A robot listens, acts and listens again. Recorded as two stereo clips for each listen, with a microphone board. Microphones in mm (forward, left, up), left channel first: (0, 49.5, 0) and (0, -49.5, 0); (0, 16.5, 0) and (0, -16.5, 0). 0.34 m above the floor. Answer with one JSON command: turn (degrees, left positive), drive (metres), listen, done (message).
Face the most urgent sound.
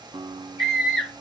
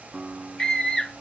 {"turn": 30}
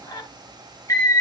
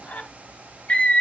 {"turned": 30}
{"turn": 145}
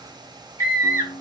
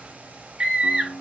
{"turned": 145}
{"turn": -30}
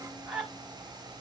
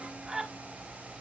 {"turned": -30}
{"done": "Facing the scream."}